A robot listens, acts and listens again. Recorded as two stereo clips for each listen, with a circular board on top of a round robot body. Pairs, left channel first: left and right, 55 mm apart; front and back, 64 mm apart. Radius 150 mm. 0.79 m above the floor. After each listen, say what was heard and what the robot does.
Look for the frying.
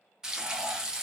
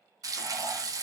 The frying: 165° right. Turn 165° right.
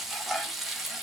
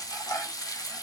Facing the frying, under 1 m away.